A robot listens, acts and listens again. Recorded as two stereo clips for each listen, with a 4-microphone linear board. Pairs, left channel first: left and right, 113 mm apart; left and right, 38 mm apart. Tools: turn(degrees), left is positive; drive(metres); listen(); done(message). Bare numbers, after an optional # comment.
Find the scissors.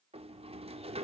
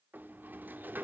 listen()
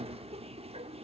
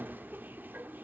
listen()
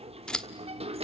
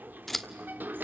turn(30)
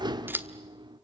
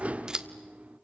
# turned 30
# So it is at 20° right.
turn(-20)
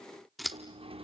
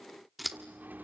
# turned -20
done("Facing the scissors, 1 to 2 m away.")